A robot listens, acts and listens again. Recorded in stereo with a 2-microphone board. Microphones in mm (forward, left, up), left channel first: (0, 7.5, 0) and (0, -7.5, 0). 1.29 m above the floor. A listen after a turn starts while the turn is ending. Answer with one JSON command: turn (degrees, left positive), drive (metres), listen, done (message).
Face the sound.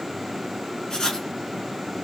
{"turn": 60}
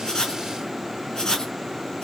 {"turn": 60}
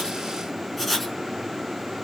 {"done": "Found it: writing, straight ahead, 2 to 4 m away."}